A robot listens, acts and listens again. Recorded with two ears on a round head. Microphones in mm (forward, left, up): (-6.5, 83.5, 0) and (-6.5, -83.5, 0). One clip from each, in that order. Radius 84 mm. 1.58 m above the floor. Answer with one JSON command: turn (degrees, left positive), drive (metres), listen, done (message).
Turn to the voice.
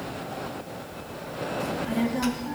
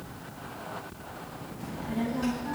{"turn": 50}
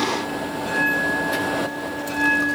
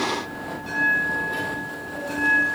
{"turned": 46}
{"turn": 60}
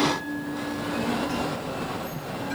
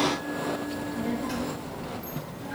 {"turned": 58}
{"turn": -15}
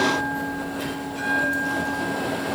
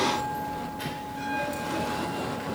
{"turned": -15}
{"done": "Facing the child speaking, 2 to 4 m away."}